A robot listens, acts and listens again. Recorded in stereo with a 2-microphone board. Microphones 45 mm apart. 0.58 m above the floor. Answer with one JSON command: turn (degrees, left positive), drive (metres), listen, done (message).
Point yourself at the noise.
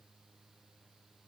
{"listen": true}
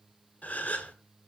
{"turn": 35}
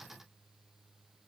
{"listen": true}
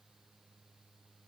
{"done": "I heard a gasp, but can't make it out now. It was about straight ahead or 110° left."}